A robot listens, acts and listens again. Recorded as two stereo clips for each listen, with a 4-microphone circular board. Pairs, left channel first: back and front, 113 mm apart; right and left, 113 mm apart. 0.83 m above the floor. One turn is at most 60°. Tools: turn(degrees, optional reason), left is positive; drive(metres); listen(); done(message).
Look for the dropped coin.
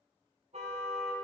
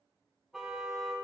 listen()
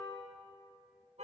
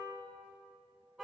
listen()
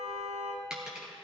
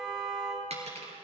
turn(degrees=60, reason="The dropped coin: 85° left.")
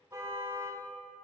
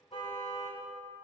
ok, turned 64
turn(degrees=20, reason="Nothing new. It was at 20° left.")
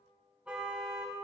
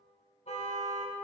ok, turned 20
done("Facing where the dropped coin came from. I can't hear it now.")